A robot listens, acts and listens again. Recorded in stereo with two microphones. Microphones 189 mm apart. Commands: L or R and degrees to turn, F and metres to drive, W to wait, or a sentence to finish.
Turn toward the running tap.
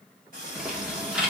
R50
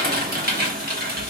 W
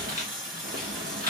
Facing the running tap, 2 to 4 m away.